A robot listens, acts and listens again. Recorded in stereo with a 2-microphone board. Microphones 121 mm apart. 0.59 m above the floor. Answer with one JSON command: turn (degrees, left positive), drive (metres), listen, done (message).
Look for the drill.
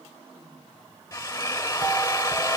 {"turn": 25}
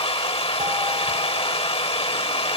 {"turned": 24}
{"turn": 130}
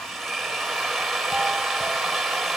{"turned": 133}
{"done": "Facing the drill."}